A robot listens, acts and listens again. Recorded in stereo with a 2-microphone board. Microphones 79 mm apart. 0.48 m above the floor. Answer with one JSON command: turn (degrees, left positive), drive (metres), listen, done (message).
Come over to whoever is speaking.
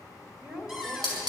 {"turn": -30}
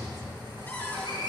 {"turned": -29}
{"listen": true}
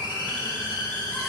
{"listen": true}
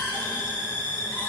{"done": "I heard a woman speaking, but can't make it out now. It was about 20° left or 140° right. I did not reach it."}